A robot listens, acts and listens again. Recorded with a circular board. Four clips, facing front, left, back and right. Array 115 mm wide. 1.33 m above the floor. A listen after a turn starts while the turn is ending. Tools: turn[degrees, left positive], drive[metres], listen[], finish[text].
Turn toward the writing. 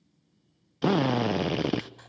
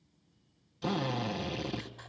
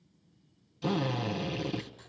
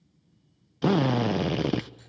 Thought: The writing: 50° left.
Action: turn[50]
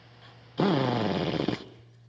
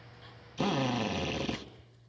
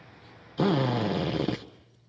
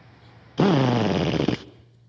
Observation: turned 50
Action: finish[Facing the writing, 2 to 4 m away.]